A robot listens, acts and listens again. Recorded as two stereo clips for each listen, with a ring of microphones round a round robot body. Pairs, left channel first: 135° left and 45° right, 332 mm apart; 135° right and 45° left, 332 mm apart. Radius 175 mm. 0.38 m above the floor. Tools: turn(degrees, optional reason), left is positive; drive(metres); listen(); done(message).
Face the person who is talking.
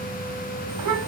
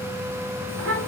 done("Facing the child speaking.")